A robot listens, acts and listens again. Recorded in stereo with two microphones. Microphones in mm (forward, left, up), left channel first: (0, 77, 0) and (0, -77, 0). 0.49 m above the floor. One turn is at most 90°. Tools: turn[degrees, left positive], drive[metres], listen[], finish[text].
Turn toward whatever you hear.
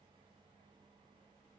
Action: listen[]
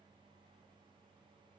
Action: listen[]
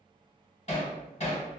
Thought: The hammering: about 50° left or 130° left.
Action: turn[50]
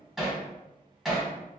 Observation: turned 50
Action: finish[Facing the hammering.]